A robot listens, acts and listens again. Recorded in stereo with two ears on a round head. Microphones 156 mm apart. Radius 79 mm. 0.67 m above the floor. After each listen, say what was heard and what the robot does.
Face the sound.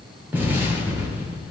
Turn 30° right.
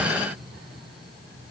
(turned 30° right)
Keep listening.
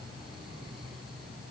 I heard an explosion, but can't make it out now. It was about 20° left or 140° right.